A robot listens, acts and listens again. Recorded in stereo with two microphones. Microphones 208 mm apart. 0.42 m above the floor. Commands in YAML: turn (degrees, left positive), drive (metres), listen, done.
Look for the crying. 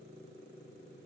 listen: true
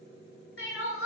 turn: 90
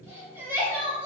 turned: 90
turn: -10
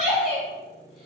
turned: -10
done: "Found it: crying, straight ahead."